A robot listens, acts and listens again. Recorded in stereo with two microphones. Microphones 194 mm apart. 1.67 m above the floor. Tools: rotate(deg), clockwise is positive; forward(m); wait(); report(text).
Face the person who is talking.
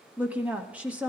rotate(30)
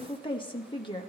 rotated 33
rotate(-25)
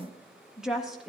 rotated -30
report("Facing the woman speaking, 1 to 2 m away.")